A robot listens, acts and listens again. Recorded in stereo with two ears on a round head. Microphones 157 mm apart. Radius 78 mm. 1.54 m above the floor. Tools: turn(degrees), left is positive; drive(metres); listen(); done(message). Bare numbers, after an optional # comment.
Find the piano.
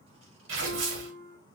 turn(30)
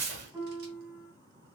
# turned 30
# So it is at 20° right.
turn(-20)
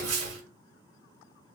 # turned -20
listen()
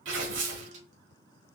listen()
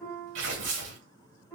done("Facing the piano, 2 to 4 m away.")